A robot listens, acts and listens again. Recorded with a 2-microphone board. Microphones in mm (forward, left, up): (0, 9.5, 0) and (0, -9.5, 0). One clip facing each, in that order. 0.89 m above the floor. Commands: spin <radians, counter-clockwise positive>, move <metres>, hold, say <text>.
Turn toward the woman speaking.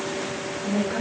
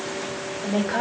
spin -0.96
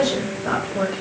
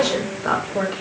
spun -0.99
spin -0.96
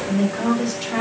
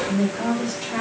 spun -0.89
spin 0.17
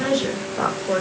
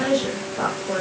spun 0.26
say Facing the woman speaking.